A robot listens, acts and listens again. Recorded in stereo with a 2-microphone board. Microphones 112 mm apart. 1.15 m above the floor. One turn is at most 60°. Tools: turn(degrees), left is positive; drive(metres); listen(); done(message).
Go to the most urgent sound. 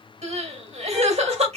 turn(degrees=-60)
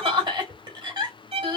turn(degrees=-40)
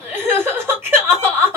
turn(degrees=-20)
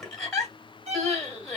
drive(metres=1.0)
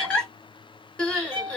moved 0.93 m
turn(degrees=10)
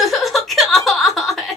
drive(metres=1.0)
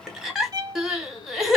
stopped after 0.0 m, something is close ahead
done("Arrived at the crying, straight ahead.")